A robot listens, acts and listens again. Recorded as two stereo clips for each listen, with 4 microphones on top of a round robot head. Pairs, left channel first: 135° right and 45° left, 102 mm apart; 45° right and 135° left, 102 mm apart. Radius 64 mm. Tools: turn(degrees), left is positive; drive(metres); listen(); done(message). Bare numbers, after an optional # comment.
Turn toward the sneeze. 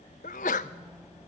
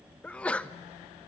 # The sneeze: 125° right.
turn(-125)
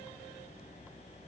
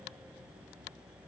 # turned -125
done("I heard a sneeze from this way, but can't make it out now.")